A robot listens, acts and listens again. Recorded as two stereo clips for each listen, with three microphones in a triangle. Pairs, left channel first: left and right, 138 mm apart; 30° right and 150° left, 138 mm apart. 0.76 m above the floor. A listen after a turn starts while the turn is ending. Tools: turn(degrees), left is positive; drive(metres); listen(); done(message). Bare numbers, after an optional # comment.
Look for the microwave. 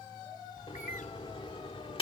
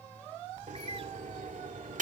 # The microwave: 135° left.
turn(135)
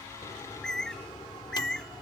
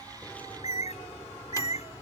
listen()
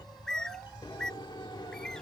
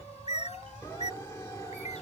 # The microwave is now 35° left.
turn(35)
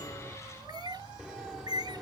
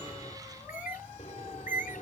listen()
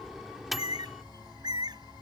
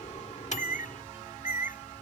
done("Facing the microwave.")